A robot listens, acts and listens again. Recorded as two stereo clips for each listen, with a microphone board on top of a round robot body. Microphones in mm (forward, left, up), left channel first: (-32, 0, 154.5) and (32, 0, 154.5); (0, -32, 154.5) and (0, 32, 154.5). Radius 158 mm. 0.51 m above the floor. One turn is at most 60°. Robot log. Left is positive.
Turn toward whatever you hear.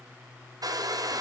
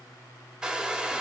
note: The hair dryer: 15° left.
cmd yaw +15
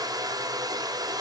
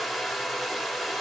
end: Found it: a hair dryer, straight ahead.